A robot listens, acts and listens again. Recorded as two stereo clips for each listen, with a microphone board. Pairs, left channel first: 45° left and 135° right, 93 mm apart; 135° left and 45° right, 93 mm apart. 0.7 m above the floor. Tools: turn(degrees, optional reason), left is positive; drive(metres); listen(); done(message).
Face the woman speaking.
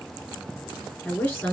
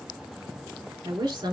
turn(degrees=-20, reason="The woman speaking: 20° right.")
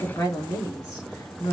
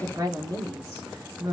done("Found it: a woman speaking, straight ahead, 2 to 4 m away.")